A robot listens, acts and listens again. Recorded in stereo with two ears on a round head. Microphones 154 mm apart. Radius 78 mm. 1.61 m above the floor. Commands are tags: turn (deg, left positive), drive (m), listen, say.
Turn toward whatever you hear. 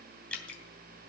<turn deg="30"/>
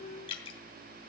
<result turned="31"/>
<turn deg="140"/>
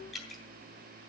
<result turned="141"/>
<say>Facing the dripping, 2 to 4 m away.</say>